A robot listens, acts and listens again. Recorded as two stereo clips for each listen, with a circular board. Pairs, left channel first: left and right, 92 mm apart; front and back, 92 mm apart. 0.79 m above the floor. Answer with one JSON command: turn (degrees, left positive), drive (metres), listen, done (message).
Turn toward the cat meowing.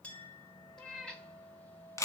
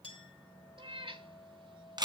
{"turn": 170}
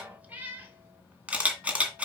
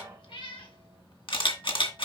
{"turn": -20}
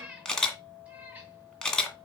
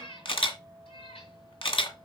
{"turn": -15}
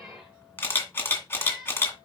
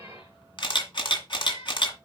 {"done": "Found it: a cat meowing, straight ahead, 2 to 4 m away."}